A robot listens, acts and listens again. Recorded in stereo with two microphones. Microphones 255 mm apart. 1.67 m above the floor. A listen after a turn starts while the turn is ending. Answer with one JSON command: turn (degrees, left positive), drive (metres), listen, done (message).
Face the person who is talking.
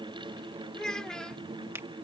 {"turn": 30}
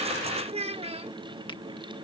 {"turn": -25}
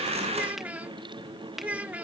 {"done": "Found it: a child speaking, straight ahead."}